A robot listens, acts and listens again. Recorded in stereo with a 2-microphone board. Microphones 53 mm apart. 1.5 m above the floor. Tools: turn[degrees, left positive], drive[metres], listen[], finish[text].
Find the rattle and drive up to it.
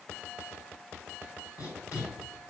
Action: listen[]
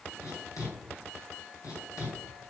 Action: listen[]
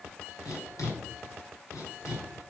Action: finish[I can't make out a rattle to turn to.]